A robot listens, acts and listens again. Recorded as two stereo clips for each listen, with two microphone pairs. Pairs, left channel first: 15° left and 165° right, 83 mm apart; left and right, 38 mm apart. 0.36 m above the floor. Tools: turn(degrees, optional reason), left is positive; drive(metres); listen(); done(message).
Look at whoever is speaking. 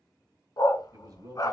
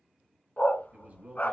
turn(degrees=-130, reason="The man speaking: 130° right.")
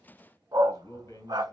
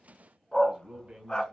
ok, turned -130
turn(degrees=-25, reason="The man speaking is now 25° right.")
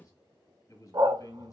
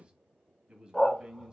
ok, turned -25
turn(degrees=-25, reason="The man speaking is now 25° right.")
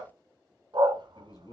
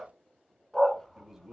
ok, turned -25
turn(degrees=-15, reason="The man speaking is now 15° right.")
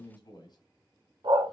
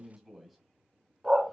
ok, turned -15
done("Found it: a man speaking, straight ahead, 1 to 2 m away.")